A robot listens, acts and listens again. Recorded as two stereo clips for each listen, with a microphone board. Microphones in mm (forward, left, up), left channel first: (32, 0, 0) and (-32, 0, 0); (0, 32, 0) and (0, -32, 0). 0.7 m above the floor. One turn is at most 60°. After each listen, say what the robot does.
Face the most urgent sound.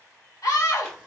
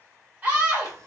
Turn 25° right.
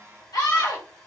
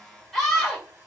Facing the scream, 2 to 4 m away.